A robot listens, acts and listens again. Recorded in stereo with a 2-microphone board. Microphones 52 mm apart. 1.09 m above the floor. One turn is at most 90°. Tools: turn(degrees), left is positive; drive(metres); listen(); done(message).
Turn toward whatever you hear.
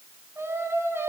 turn(degrees=-50)
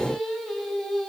done("Found it: singing, straight ahead, over 4 m away.")